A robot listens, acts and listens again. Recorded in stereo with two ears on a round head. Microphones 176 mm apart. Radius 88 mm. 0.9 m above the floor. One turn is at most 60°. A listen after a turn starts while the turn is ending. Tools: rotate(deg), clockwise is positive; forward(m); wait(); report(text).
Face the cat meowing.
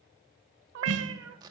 rotate(60)
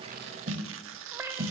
rotate(15)
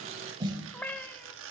rotate(-10)
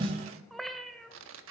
report("Found it: a cat meowing, straight ahead.")